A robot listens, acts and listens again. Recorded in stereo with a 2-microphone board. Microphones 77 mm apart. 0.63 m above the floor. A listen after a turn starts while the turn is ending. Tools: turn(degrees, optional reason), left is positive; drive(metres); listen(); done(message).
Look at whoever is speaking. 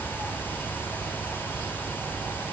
listen()
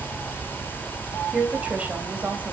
turn(degrees=-20, reason="The woman speaking: about 20° right or 160° right.")
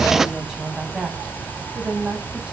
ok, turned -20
turn(degrees=-30)
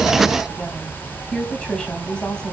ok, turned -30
turn(degrees=10, reason="So it is at 10° left.")
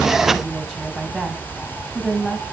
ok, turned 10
done("Found it: a woman speaking, straight ahead.")